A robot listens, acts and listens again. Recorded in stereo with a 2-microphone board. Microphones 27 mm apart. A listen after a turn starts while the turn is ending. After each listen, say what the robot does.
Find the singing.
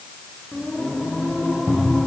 Turn 25° left.
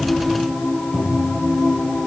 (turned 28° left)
Turn 135° left.
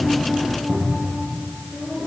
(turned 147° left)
Facing the singing.